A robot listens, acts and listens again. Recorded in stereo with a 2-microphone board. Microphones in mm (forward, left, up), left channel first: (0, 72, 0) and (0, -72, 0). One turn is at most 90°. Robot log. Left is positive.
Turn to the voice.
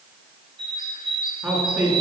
cmd yaw -30
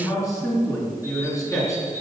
note: So it is at 20° left.
cmd yaw +20
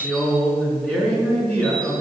end: Facing the man speaking, over 4 m away.